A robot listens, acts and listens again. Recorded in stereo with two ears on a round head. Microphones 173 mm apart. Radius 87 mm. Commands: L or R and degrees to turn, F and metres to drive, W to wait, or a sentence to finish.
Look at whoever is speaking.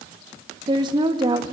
R25
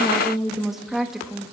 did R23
Facing the woman speaking.